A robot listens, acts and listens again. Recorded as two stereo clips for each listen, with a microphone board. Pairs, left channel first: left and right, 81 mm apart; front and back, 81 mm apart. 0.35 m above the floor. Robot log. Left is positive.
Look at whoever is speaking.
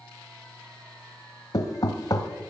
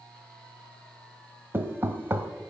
cmd idle
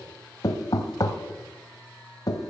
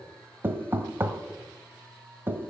cmd idle
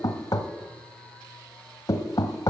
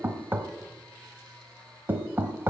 end: I can't make out anyone speaking to turn to.